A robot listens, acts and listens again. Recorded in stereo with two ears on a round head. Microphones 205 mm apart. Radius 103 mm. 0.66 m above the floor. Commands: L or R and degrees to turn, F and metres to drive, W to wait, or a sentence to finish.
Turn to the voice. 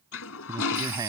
R15
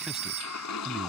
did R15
Facing the man speaking.